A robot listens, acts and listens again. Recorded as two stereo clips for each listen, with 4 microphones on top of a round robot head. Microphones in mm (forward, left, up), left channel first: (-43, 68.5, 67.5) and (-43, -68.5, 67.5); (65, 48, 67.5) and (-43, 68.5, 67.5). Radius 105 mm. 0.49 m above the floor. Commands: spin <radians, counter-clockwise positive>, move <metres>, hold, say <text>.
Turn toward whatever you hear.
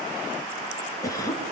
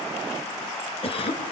spin 0.35
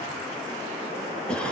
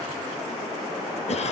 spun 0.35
say Facing the cough, over 4 m away.